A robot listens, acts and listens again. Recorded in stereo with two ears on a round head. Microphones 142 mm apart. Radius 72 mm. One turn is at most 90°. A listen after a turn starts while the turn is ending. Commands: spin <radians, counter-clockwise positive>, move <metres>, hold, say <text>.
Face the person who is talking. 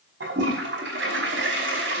hold
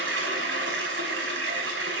hold
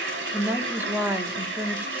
spin -0.52
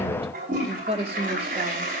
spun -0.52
spin -1.57
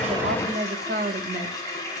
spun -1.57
spin -1.05
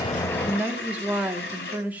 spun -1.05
spin -0.17
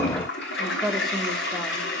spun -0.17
say Facing the woman speaking, 1 to 2 m away.